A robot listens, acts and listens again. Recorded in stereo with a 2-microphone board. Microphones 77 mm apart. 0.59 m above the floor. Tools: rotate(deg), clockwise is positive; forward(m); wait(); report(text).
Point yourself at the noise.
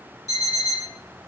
rotate(45)
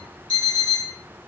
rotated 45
rotate(90)
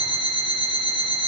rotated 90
rotate(-10)
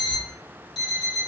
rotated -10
report("Found it: an alarm clock, straight ahead, 1 to 2 m away.")